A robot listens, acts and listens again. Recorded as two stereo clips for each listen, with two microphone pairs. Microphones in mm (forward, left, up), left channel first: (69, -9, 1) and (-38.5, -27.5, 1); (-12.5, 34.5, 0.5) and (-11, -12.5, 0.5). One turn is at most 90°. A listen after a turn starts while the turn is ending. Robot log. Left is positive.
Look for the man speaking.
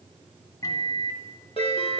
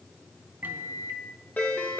cmd idle
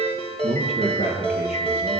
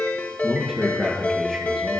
note: The man speaking: 10° left.
cmd yaw +10
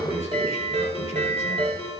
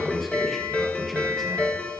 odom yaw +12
end: Found it: a man speaking, straight ahead, over 4 m away.